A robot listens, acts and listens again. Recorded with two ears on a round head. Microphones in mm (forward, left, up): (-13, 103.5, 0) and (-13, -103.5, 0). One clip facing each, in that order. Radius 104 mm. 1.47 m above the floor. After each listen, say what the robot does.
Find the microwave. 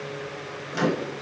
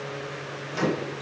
Turn 30° left.
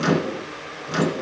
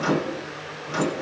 Turn 150° left.
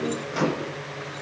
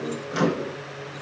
Turn 25° right.
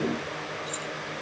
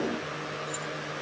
Keep listening.
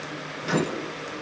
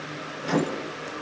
Found it: a microwave, straight ahead, 1 to 2 m away.